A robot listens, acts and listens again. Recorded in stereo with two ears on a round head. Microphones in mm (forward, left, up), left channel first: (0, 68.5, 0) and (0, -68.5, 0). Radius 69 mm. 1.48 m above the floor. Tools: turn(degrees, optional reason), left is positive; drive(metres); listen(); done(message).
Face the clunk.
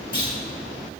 turn(degrees=30, reason="The clunk: about 30° left or 150° left.")
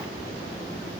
listen()
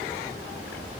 done("I heard a clunk, but can't make it out now. It was about straight ahead or 120° left.")